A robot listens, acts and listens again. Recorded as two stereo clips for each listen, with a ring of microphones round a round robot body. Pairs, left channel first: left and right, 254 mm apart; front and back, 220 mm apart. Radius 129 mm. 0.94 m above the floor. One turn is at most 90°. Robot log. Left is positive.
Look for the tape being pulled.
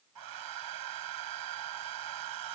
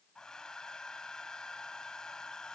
cmd idle
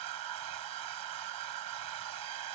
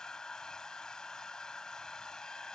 cmd idle
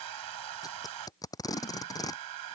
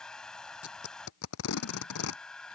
note: The tape being pulled: 15° left.
cmd yaw +15
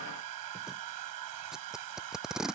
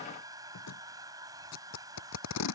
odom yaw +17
end: Facing the tape being pulled.